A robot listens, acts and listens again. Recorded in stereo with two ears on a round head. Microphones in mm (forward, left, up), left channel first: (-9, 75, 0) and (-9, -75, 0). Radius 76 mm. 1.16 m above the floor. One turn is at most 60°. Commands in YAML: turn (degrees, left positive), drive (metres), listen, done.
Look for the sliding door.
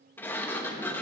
turn: 30
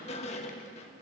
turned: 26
turn: 60
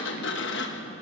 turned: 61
turn: 60
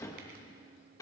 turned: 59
turn: 20
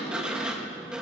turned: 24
done: "Facing the sliding door."